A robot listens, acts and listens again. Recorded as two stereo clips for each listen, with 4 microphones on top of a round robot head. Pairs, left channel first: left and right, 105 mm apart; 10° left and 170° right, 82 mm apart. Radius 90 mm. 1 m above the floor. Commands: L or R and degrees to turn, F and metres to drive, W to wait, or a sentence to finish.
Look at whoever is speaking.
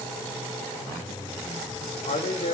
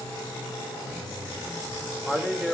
L100
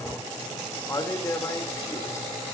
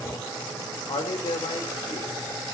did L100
L30
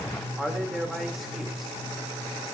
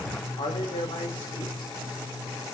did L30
Facing the man speaking.